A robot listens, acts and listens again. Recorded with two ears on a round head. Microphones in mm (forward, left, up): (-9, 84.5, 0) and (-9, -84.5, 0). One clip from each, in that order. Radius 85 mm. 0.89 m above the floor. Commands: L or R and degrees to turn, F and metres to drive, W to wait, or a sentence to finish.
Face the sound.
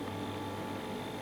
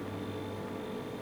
W
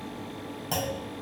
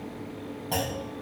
L60
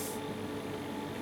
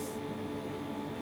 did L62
W
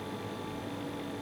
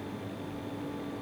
I heard a clunk, but can't make it out now. It was about 5° right or 60° left.